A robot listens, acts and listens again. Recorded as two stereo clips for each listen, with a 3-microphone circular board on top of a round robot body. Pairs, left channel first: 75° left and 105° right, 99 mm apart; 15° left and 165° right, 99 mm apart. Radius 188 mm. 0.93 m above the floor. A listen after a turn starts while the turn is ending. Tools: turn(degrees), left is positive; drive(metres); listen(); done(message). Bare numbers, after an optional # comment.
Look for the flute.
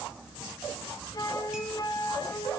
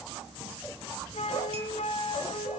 # The flute: 20° left.
turn(20)
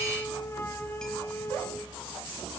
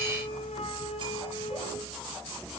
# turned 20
done("Facing the flute, 1 to 2 m away.")